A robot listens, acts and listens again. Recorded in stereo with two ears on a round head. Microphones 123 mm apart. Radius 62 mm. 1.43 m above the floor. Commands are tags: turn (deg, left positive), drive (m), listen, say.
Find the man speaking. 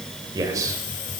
<turn deg="-25"/>
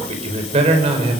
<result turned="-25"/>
<turn deg="-135"/>
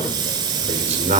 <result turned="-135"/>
<turn deg="-55"/>
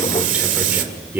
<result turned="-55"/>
<turn deg="-15"/>
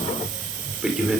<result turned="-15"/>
<say>Found it: a man speaking, straight ahead.</say>